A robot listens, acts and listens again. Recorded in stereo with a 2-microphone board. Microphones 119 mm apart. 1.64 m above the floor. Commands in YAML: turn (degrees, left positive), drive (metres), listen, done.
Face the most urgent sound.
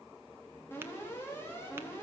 turn: 20
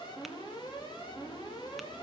turn: 145
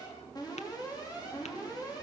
turn: 35
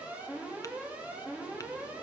turn: -10
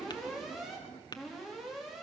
done: "Found it: an alarm, straight ahead."